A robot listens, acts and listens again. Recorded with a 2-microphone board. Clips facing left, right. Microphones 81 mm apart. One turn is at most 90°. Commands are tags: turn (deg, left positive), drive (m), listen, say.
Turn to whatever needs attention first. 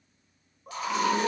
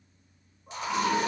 <turn deg="90"/>
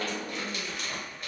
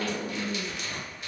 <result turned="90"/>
<turn deg="10"/>
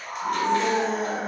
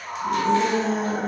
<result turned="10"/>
<say>Found it: a scream, straight ahead, 1 to 2 m away.</say>